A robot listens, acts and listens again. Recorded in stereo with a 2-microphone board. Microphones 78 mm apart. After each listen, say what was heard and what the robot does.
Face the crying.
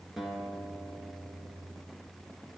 Keep listening.
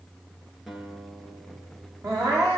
The crying: about 45° right or 135° right. Turn 45° right.
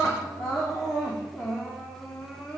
Found it: crying, straight ahead.